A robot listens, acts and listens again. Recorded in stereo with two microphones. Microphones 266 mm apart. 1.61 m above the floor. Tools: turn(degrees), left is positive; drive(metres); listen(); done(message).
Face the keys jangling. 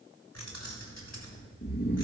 turn(degrees=70)
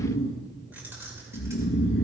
turn(degrees=-10)
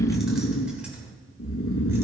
done("Facing the keys jangling.")